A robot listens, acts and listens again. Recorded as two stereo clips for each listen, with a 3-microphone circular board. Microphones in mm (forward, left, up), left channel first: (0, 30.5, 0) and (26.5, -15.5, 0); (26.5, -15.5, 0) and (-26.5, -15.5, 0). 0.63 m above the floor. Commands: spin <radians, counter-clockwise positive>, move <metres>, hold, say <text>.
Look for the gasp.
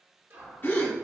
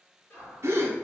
spin 2.79
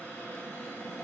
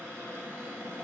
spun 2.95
spin -0.17
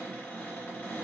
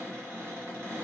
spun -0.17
say I heard a gasp from this way, but can't make it out now.